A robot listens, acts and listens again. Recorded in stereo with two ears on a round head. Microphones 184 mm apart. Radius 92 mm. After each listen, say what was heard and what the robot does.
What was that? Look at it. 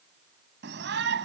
The shout: about 55° right or 125° right. Turn 55° right.
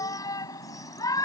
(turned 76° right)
So it is at 20° left. Turn 20° left.
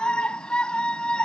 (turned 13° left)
Facing the shout.